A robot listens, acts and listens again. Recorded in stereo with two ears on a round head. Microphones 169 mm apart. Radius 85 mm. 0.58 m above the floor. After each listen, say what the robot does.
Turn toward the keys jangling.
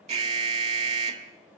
Keep listening.
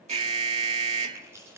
Turn 30° right.
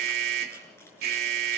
Keep listening.
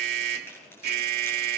Turn 15° left.
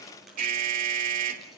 Keep listening.
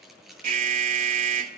Found it: keys jangling, straight ahead, over 4 m away.